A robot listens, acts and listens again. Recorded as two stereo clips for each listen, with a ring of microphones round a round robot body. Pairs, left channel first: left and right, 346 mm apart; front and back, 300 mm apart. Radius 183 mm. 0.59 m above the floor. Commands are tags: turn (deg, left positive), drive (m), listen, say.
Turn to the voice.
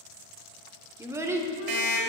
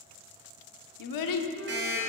<turn deg="-10"/>
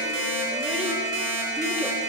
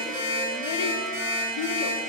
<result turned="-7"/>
<listen/>
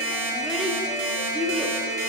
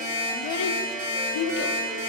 <say>Found it: a child speaking, straight ahead.</say>